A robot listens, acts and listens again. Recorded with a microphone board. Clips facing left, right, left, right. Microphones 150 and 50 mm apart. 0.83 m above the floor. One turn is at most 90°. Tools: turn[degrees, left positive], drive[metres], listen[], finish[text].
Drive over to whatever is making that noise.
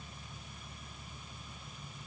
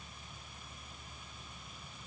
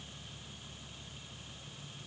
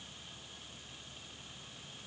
Action: listen[]
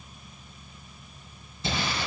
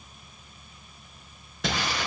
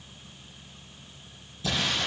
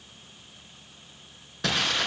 Thought: The crumpling: about 75° right or 105° right.
Action: turn[-75]
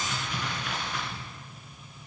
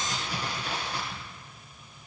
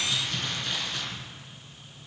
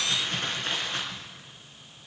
Thought: So it is at 30° right.
Action: turn[-30]
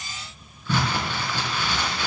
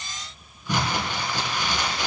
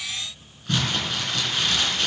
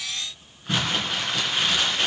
Thought: The crumpling is now 15° right.
Action: turn[-15]
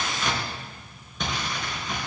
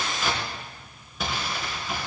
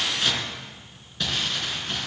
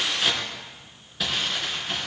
Action: drive[1.0]
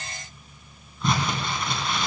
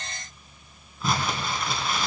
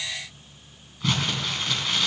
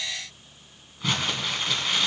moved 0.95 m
Action: drive[1.0]
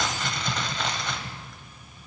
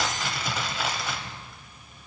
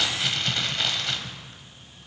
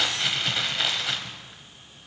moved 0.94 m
Action: drive[1.0]
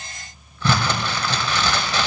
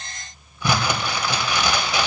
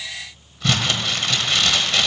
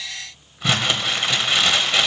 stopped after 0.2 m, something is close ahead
Thought: The crumpling is now 15° right.
Action: turn[-15]
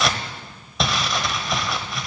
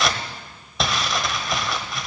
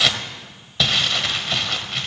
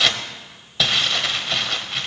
Action: finish[Arrived at the crumpling, straight ahead.]